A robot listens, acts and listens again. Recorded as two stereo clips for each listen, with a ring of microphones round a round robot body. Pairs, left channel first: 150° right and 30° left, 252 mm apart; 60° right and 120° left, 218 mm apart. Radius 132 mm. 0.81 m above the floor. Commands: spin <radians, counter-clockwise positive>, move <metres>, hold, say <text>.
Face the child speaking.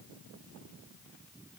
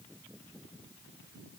hold
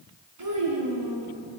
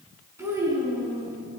spin 0.79
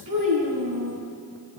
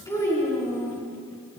spin 0.35
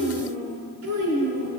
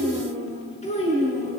say Found it: a child speaking, straight ahead.